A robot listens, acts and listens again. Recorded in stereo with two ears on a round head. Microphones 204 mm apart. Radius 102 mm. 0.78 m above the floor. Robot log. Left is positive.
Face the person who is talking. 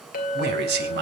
note: The man speaking: about 45° right or 135° right.
cmd yaw -45
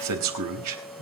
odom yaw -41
note: So it is at 90° right.
cmd yaw -90
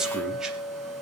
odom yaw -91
end: Found it: a man speaking, straight ahead, 2 to 4 m away.